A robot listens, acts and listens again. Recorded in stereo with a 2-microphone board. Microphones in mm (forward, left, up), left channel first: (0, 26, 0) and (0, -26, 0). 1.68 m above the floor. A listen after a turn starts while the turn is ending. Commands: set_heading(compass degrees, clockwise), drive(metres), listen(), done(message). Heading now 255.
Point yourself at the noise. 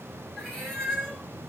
set_heading(225)
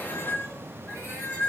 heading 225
set_heading(100)
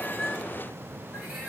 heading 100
set_heading(115)
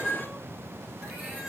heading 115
listen()
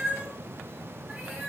set_heading(125)
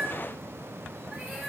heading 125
done("Facing the cat meowing.")